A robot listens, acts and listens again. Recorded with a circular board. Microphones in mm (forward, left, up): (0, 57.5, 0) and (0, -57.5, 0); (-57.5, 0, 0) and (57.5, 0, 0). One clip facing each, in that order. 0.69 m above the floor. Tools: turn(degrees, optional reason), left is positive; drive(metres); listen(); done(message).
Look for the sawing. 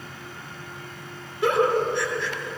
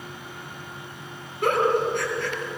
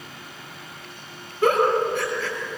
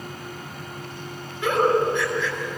listen()
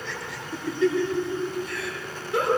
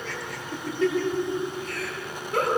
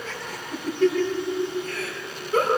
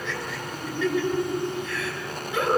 listen()
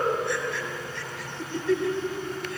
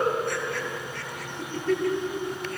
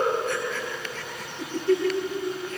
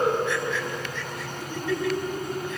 done("I can't make out sawing, only a giggle.")